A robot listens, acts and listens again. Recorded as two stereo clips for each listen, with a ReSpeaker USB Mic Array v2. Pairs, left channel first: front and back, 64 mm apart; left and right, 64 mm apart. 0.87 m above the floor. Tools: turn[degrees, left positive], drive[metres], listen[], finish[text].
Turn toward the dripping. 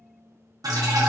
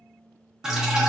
Thought: The dripping: 170° right.
Action: turn[-170]
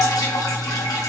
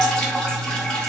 Thought: The dripping is now 15° left.
Action: turn[15]
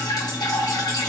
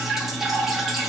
Action: finish[Facing the dripping, under 1 m away.]